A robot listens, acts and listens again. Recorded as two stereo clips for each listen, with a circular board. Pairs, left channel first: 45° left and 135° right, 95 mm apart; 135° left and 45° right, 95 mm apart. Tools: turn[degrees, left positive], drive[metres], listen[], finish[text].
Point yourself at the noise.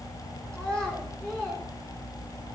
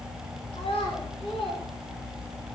Thought: The child speaking: 125° left.
Action: turn[125]
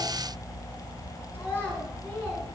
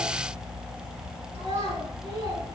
Thought: The child speaking is now 25° right.
Action: turn[-25]
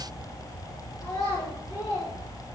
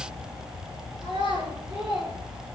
Thought: The child speaking is now 10° right.
Action: turn[-10]
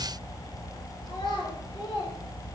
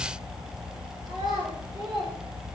Action: finish[Facing the child speaking, over 4 m away.]